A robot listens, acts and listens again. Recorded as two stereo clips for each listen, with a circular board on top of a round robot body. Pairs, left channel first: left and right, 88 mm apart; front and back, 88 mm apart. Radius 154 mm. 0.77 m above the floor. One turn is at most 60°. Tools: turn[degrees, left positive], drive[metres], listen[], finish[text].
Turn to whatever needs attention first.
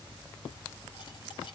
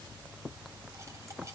Action: listen[]
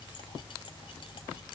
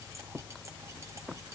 Action: listen[]
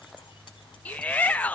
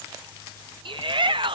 Thought: The shout: 165° left.
Action: turn[60]
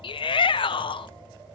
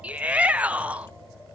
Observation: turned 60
Thought: The shout is now 105° left.
Action: turn[60]
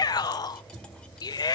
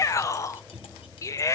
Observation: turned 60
Thought: The shout is now 50° left.
Action: turn[50]
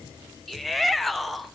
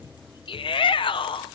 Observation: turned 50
Action: finish[Facing the shout, 1 to 2 m away.]